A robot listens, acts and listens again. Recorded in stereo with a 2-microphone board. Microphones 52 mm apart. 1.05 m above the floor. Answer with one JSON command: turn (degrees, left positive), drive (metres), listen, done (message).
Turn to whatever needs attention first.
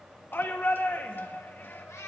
{"turn": 40}
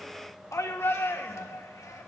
{"turn": 100}
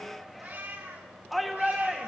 {"done": "Found it: a shout, straight ahead, 1 to 2 m away."}